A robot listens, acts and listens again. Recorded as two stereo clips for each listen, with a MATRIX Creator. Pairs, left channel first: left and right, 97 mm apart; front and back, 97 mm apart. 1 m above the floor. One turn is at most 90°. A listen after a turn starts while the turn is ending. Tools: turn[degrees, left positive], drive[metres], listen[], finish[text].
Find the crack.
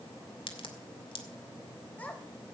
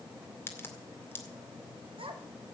Thought: The crack: 65° left.
Action: turn[65]
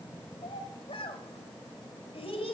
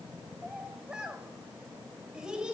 Action: finish[I heard a crack from this way, but can't make it out now.]